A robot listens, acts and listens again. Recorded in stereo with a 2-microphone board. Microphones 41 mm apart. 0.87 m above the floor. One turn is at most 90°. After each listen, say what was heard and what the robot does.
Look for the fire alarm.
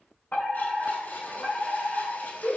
The fire alarm: about 45° left or 135° left. Turn 45° left.
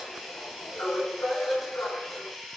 So it is at 90° left. Turn 90° left.
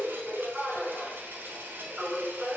The fire alarm is now 20° right. Turn 20° right.
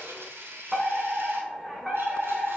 Facing the fire alarm, over 4 m away.